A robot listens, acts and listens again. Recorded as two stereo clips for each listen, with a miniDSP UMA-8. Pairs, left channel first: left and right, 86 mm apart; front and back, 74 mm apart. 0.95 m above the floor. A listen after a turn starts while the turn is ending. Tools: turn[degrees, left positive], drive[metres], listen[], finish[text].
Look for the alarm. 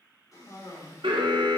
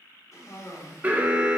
Thought: The alarm: 110° right.
Action: turn[-110]
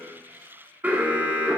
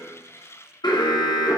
Thought: The alarm is now 20° right.
Action: turn[-20]
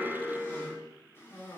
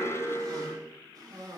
Action: finish[Found it: an alarm, straight ahead.]